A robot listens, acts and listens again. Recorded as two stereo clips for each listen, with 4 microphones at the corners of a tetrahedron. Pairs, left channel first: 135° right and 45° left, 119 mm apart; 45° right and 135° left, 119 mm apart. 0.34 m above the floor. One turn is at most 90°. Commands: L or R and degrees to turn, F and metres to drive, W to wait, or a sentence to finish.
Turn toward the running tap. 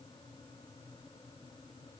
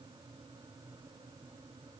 W
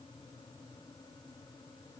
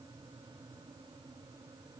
W
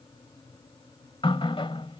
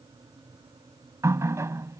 R90
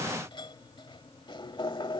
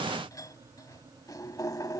R90
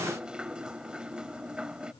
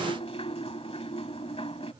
R35
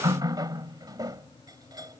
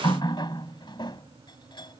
Found it: a running tap, straight ahead.